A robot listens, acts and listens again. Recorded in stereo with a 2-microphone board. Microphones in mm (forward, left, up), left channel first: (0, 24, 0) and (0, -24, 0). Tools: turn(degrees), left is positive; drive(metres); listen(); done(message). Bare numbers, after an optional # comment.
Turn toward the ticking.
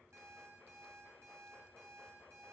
listen()
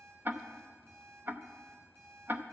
# The ticking: about 40° right or 140° right.
turn(-40)
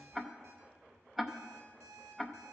done("Found it: ticking, straight ahead.")